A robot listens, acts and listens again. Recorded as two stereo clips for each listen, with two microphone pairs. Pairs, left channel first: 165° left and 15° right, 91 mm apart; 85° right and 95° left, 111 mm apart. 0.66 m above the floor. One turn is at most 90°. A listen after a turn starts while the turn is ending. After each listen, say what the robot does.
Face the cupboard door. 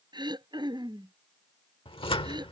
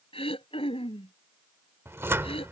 Turn 90° left.
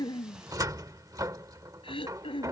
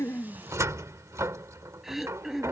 Turn 30° left.
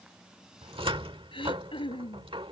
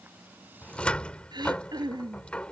Facing the cupboard door.